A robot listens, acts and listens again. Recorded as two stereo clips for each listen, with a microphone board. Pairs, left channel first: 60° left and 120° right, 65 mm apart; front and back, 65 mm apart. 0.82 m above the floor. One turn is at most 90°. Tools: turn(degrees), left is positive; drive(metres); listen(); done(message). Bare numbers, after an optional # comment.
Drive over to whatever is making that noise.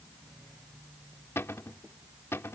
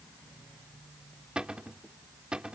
# The cupboard door: 105° left.
turn(90)
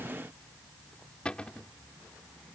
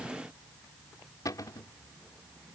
# The cupboard door is now 15° right.
turn(-15)
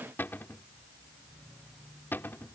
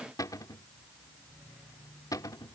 drive(1.0)
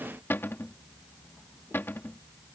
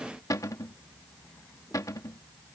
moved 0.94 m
# The cupboard door is now 10° left.
turn(10)
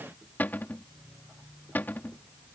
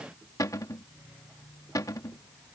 drive(1.0)
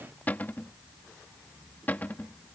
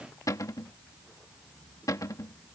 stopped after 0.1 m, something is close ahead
done("Arrived at the cupboard door, straight ahead.")